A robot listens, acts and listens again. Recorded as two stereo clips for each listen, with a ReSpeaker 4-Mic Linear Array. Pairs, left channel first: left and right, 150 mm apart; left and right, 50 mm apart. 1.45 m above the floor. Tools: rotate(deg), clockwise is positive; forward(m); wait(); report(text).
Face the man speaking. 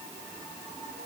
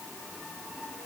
wait()
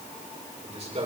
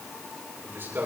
rotate(50)
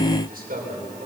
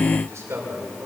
rotate(70)
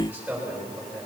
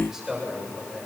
report("Facing the man speaking.")